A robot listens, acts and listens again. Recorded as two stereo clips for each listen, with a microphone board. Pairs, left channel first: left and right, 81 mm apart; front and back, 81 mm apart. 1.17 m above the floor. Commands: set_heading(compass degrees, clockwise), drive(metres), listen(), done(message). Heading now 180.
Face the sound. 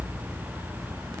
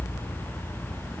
listen()
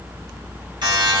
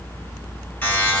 set_heading(250)
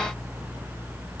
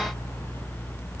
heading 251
listen()
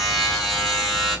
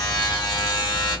done("Found it: a buzzer, straight ahead, 2 to 4 m away.")